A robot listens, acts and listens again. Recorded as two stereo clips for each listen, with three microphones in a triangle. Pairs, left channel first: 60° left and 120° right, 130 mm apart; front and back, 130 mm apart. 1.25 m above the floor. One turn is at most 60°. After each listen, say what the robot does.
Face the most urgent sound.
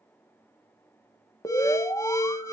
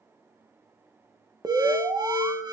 Turn 60° left.
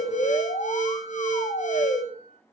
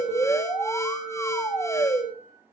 Turn 60° left.
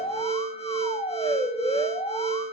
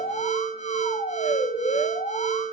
Turn 20° left.
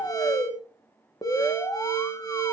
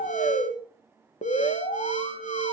Facing the alarm, 1 to 2 m away.